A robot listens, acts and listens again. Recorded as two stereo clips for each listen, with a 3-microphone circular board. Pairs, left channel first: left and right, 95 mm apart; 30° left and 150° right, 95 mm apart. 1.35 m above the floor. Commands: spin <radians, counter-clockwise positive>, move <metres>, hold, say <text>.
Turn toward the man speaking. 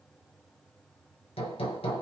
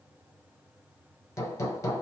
hold
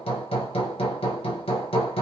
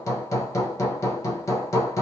hold
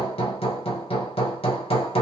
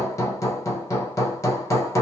say I can't make out a man speaking, only hammering.